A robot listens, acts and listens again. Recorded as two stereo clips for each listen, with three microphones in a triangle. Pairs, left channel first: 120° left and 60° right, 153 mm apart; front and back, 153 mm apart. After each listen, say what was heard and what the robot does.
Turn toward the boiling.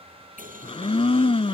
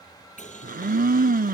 The boiling: 35° right. Turn 35° right.
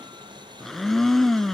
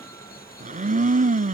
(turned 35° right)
Found it: boiling, straight ahead.